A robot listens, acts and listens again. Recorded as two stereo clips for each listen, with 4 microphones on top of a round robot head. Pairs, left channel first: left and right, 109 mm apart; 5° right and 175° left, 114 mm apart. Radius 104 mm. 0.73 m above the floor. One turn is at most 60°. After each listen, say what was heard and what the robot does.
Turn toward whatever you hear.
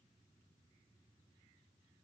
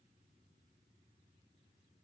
Keep listening.
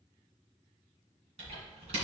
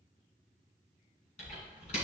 The typing on a keyboard: 45° right. Turn 45° right.
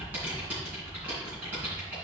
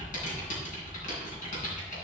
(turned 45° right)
The typing on a keyboard is now 10° right. Turn 10° right.
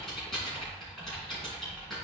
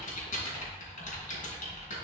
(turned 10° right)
Facing the typing on a keyboard.